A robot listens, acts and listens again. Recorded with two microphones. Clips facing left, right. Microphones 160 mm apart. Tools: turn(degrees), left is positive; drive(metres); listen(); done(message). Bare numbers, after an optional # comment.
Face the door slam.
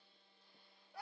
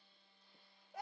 listen()
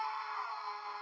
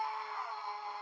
listen()
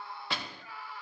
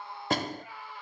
# The door slam: about 45° right or 135° right.
turn(-45)
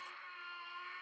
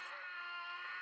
listen()
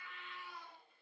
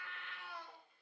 done("I heard a door slam, but can't make it out now. It was about straight ahead or 90° right.")